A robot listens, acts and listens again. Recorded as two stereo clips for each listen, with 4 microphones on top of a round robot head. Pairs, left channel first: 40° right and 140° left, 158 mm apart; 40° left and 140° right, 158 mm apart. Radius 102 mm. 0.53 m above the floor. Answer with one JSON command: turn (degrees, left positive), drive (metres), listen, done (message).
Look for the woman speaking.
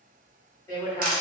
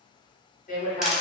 {"turn": 25}
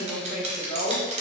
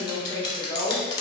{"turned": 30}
{"turn": -25}
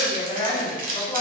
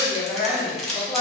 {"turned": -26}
{"turn": -50}
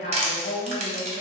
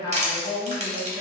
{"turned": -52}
{"turn": -40}
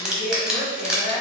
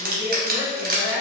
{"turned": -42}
{"done": "Facing the woman speaking, 1 to 2 m away."}